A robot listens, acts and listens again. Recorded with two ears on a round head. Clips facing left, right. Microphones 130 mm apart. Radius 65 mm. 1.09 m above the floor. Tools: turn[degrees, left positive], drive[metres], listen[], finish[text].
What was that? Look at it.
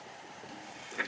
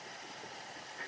Action: turn[90]
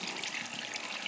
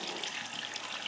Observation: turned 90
Thought: So it is at 10° left.
Action: turn[10]
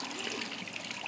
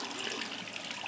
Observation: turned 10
Action: finish[Found it: a running tap, straight ahead, 1 to 2 m away.]